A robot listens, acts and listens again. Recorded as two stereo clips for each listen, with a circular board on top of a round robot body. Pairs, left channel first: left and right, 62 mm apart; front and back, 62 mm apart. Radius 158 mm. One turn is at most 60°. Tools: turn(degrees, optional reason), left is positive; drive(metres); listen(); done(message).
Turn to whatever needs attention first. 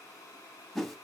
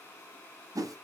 listen()
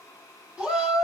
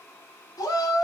done("Found it: a shout, straight ahead, 2 to 4 m away.")